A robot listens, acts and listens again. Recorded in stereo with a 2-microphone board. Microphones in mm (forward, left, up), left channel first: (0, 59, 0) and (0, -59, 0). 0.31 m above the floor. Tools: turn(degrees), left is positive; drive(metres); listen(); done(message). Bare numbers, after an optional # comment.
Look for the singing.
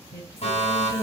# The singing: about 25° left or 155° left.
turn(25)
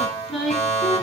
done("Found it: singing, straight ahead, 2 to 4 m away.")